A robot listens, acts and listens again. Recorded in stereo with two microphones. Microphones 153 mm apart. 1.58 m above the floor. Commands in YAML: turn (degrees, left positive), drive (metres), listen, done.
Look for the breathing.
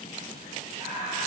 turn: -45
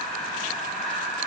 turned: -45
done: "Facing the breathing."